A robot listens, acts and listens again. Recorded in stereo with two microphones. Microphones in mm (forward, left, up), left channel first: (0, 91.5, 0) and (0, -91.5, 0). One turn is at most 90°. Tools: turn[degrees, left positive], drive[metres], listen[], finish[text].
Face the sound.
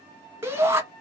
Action: turn[-30]
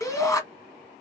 Thought: So it is at 20° left.
Action: turn[20]
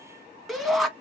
Action: finish[Facing the shout, 1 to 2 m away.]